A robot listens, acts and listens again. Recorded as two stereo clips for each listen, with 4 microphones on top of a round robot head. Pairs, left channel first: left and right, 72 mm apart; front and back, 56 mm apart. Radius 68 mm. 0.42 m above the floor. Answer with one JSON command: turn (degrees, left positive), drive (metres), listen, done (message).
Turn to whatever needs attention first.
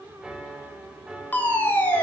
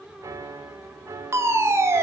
{"turn": 155}
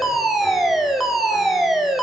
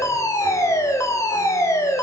{"done": "Found it: a fire alarm, straight ahead, 2 to 4 m away."}